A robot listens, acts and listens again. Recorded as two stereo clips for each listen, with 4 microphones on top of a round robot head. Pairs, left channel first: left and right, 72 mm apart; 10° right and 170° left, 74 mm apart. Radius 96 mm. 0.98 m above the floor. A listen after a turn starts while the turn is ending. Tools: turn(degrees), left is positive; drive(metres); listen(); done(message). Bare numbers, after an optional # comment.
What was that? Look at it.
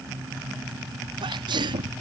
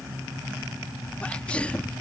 # The sneeze: 85° right.
turn(-85)
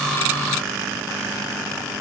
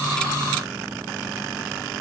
done("I heard a sneeze from this way, but can't make it out now.")